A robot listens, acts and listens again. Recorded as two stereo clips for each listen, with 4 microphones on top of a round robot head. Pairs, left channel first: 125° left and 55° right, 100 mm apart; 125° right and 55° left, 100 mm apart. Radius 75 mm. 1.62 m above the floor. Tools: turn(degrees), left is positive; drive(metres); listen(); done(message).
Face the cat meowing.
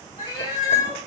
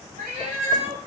turn(degrees=70)
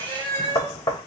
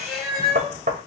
turn(degrees=-70)
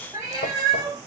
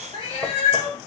turn(degrees=-105)
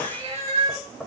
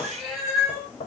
turn(degrees=-30)
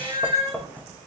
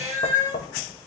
turn(degrees=-10)
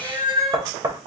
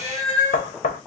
done("Facing the cat meowing, 2 to 4 m away.")